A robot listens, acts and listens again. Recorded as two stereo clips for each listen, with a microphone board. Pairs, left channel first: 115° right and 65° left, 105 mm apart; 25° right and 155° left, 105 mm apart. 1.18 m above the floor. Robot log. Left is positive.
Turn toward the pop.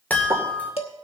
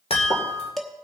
note: The pop: 10° left.
cmd yaw +10
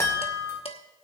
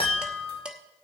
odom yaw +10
end: I heard a pop from this way, but can't make it out now.